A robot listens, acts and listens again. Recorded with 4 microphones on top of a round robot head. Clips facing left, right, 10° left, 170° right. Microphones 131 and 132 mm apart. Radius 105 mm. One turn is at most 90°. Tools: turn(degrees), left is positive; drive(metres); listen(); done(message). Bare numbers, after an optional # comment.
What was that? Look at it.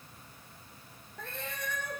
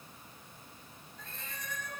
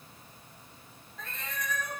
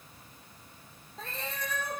# The cat meowing: 130° left.
turn(90)
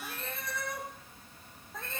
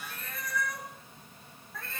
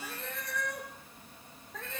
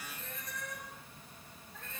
# The cat meowing is now 20° left.
turn(20)
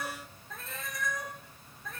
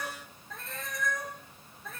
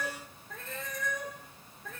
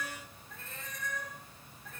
done("Found it: a cat meowing, straight ahead, over 4 m away.")